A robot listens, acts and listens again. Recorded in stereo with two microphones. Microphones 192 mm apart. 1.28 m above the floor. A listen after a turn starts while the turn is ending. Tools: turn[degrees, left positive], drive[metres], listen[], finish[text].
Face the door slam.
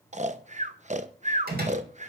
Thought: The door slam: about 50° right or 130° right.
Action: turn[-50]
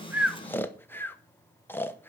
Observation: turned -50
Action: listen[]
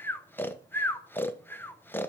Action: finish[I heard a door slam, but can't make it out now. It was about straight ahead or 80° right.]